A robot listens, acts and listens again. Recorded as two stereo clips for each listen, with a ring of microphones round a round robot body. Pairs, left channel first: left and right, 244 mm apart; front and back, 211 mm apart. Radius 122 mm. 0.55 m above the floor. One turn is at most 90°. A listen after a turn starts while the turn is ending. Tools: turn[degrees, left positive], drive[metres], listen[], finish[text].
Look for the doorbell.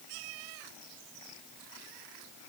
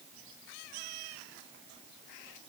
Action: listen[]
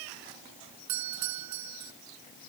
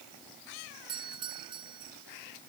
Thought: The doorbell: 110° right.
Action: turn[-90]
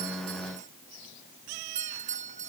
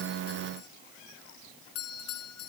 Thought: The doorbell is now 30° right.
Action: turn[-30]
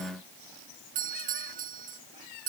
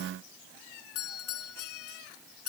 Thought: The doorbell is now 30° right.
Action: turn[-30]
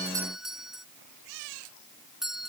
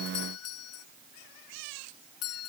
Action: finish[Facing the doorbell.]